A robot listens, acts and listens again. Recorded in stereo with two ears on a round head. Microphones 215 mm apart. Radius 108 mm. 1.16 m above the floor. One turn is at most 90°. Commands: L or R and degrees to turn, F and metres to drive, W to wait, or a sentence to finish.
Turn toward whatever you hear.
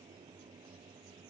W
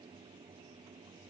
W
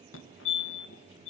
L55
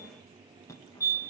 L15
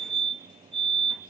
Found it: a fire alarm, straight ahead.